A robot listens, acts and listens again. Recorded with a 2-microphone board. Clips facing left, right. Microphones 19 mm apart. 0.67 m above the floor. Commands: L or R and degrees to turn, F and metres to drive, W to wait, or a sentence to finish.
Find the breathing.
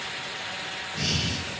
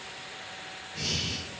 L15
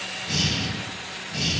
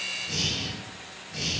L150
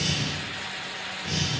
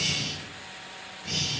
Found it: breathing, straight ahead, 2 to 4 m away.